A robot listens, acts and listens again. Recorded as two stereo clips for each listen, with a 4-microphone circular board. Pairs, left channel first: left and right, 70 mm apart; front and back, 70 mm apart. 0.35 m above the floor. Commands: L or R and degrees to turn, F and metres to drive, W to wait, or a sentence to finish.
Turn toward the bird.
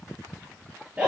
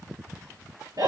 W
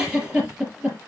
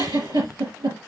W
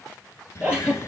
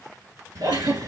L145
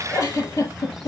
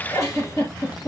Facing the bird.